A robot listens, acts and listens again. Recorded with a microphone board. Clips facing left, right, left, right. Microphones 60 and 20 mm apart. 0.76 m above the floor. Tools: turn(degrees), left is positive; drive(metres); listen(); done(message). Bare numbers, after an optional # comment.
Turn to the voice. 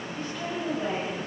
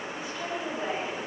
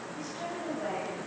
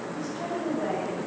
turn(-30)
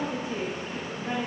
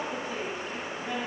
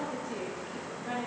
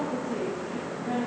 # So it is at 20° left.
turn(20)
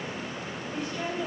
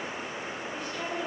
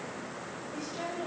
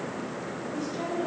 done("Found it: a woman speaking, straight ahead, over 4 m away.")